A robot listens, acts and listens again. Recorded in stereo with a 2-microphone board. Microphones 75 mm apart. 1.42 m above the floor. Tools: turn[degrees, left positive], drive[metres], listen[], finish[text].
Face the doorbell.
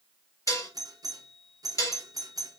Thought: The doorbell: about 55° right or 125° right.
Action: turn[-55]
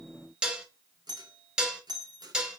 Thought: So it is at 70° right.
Action: turn[-70]
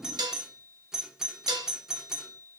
Thought: The doorbell is now 10° right.
Action: turn[-10]
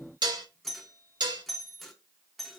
Action: finish[Found it: a doorbell, straight ahead.]